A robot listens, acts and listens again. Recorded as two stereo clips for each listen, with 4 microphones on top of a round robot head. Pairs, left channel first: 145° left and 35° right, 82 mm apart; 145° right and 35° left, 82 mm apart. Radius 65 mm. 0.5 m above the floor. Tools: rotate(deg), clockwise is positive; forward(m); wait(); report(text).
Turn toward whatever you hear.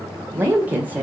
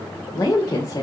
rotate(105)
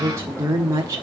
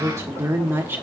rotate(10)
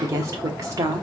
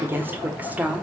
rotate(30)
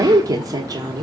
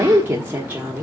rotate(30)
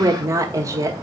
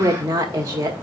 report("Facing the woman speaking, 1 to 2 m away.")